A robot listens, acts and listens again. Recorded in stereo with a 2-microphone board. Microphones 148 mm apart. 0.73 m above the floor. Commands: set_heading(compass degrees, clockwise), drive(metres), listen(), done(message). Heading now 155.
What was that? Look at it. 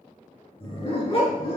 set_heading(115)
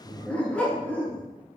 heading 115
set_heading(100)
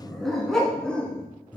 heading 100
set_heading(90)
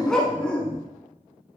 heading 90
set_heading(80)
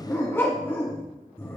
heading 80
set_heading(65)
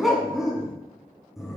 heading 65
done("Facing the dog barking.")